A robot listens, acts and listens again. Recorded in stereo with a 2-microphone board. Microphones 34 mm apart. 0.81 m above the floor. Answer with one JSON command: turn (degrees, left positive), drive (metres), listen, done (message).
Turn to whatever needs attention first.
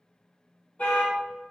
{"turn": 45}
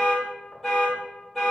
{"done": "Facing the alarm."}